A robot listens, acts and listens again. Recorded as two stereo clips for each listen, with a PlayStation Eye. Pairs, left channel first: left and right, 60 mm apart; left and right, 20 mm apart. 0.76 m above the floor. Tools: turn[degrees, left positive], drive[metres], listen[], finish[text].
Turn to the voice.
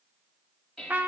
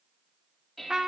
Action: listen[]
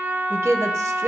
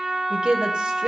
Thought: The woman speaking: about 50° right or 130° right.
Action: turn[-50]
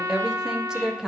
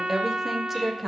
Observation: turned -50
Thought: So it is at 10° right.
Action: turn[-10]
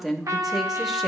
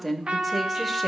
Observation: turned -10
Action: finish[Facing the woman speaking, under 1 m away.]